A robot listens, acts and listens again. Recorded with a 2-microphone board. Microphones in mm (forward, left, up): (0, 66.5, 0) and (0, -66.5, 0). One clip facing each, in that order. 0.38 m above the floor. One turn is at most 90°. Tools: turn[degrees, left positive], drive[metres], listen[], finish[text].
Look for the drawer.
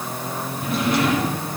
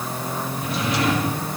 Thought: The drawer: about 50° left or 130° left.
Action: turn[50]
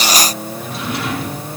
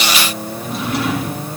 Action: finish[Found it: a drawer, straight ahead, over 4 m away.]